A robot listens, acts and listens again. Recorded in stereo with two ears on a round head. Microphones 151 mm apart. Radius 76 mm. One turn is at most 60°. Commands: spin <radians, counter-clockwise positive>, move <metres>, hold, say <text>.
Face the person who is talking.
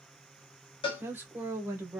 spin -0.52
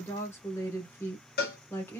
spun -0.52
spin 0.26
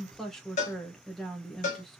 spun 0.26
say Found it: a woman speaking, straight ahead, 1 to 2 m away.